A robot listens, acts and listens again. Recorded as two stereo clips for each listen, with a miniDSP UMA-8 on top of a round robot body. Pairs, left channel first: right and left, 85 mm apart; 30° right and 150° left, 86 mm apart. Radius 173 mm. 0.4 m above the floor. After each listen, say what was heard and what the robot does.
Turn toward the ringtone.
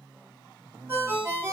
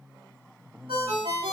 The ringtone: 155° left. Turn 155° left.
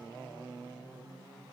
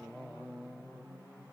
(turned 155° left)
Keep listening.
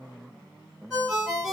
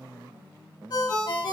Facing the ringtone.